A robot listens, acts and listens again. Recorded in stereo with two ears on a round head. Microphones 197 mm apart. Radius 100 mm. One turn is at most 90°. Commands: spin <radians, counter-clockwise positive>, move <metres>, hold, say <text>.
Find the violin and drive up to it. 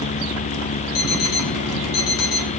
hold
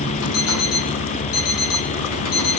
hold
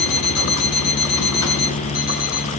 say I can't make out a violin, only an alarm clock.